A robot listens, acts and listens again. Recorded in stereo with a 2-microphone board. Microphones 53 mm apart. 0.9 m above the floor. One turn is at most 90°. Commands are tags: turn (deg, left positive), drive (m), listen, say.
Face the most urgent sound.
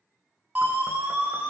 <turn deg="-30"/>
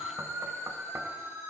<turn deg="-90"/>
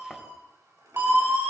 <turn deg="-40"/>
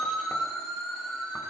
<say>Found it: a siren, straight ahead, over 4 m away.</say>